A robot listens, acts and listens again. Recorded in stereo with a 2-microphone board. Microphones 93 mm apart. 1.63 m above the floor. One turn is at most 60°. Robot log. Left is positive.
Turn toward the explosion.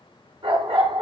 cmd idle
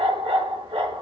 cmd idle
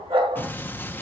note: The explosion: about 20° left or 160° left.
cmd yaw +20
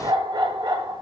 cmd idle
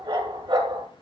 end: I heard an explosion, but can't make it out now. It was about straight ahead or 140° left.